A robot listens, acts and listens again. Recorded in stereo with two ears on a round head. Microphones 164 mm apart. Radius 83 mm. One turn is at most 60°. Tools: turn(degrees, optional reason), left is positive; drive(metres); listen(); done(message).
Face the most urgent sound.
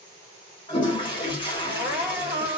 turn(degrees=60, reason="The crying: about 60° left or 120° left.")
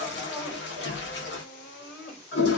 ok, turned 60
turn(degrees=55, reason="So it is at 55° left.")
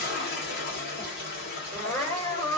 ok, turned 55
turn(degrees=30, reason="The crying is now 30° left.")
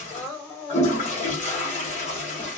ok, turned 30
turn(degrees=10, reason="The crying is now 10° left.")
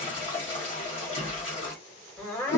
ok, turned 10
done("Facing the crying.")